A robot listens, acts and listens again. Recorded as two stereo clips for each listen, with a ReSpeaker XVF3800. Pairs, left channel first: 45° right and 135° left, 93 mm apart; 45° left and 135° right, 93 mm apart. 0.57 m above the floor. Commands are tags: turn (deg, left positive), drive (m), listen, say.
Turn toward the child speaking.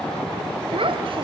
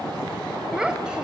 <turn deg="145"/>
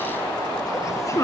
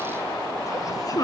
<say>Facing the child speaking.</say>